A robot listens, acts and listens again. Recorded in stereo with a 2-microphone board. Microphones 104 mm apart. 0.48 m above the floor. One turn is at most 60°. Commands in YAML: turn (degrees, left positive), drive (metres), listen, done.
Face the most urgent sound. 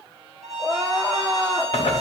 turn: 30
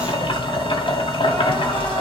listen: true
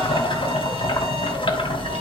listen: true
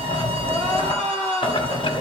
turn: 60
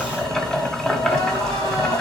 turn: 60
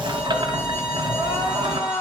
turn: 50
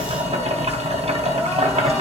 listen: true
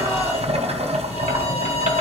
listen: true
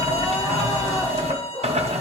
done: "Facing where the crying came from. I can't hear it now."